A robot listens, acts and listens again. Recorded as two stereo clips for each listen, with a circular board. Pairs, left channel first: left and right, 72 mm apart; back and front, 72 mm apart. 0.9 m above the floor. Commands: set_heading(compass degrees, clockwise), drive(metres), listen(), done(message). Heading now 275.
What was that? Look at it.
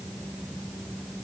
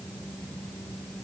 listen()
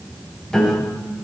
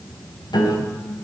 set_heading(105)
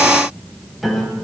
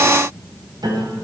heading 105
done("Found it: a piano, straight ahead, 2 to 4 m away.")